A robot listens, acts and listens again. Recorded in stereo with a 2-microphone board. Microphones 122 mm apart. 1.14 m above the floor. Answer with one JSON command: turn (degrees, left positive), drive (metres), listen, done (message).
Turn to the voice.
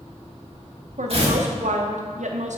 {"turn": -90}
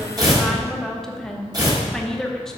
{"done": "Facing the woman speaking."}